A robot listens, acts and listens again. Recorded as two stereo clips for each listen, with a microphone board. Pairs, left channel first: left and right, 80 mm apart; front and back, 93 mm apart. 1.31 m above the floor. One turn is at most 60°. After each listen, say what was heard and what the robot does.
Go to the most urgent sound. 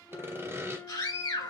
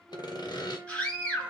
The scream: 75° left. Turn 60° left.
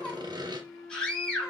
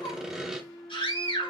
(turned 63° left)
The scream is now 10° left. Turn 10° left.
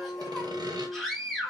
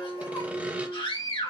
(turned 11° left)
Drive 1.0 m forward.
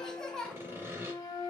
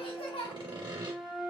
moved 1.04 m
The scream is now 10° left. Turn 10° left.
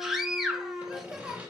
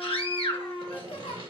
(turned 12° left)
Drive 1.0 m forward.
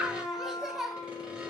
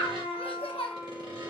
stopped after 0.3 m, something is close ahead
I am next to the scream.